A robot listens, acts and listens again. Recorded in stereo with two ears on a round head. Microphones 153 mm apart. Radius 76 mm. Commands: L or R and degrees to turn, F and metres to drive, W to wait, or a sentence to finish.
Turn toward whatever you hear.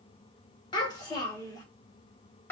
L30
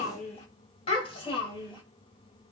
L155
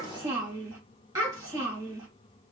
R25
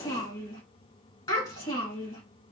L20
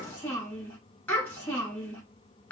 L10
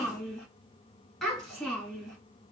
Facing the child speaking, 2 to 4 m away.